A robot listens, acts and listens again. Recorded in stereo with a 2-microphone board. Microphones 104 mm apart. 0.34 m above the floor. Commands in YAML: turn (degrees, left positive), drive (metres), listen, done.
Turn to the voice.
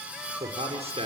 turn: -70
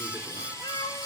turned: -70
listen: true
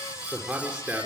turn: -10
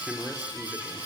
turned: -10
done: "Facing the man speaking, over 4 m away."